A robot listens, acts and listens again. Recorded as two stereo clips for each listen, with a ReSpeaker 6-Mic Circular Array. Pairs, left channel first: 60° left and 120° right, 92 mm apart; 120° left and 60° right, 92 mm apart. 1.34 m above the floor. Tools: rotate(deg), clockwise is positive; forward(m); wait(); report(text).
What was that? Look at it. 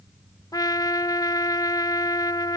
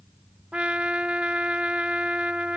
rotate(-15)
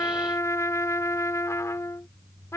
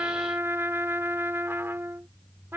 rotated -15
report("Found it: a trumpet, straight ahead.")